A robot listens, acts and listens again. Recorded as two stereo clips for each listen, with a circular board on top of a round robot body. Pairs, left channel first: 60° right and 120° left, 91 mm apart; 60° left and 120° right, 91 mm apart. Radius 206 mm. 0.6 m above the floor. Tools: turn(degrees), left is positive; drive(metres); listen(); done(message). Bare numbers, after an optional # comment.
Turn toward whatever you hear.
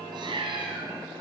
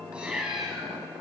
# The cat meowing: 155° left.
turn(155)
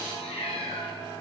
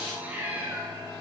# The cat meowing is now 50° right.
turn(-50)
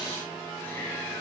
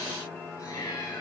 listen()
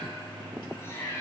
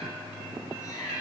done("Facing the cat meowing, 2 to 4 m away.")